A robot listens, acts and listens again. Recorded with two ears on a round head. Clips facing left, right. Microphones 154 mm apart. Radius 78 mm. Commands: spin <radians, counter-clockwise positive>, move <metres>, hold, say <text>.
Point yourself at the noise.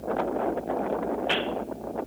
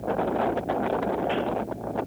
hold
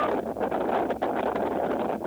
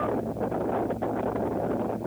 hold
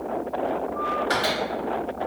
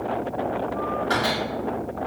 spin 0.52
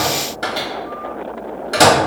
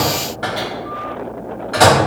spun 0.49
spin 2.09
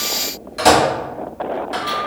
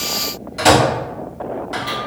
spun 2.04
say Facing the microwave, 1 to 2 m away.